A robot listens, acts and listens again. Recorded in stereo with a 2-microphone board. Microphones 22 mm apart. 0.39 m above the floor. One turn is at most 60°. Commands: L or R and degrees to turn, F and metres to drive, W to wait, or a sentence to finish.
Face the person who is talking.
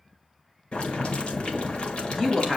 L30
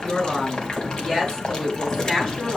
L60
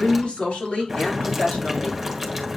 L60
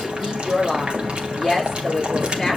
L15
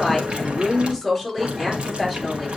Found it: a woman speaking, straight ahead.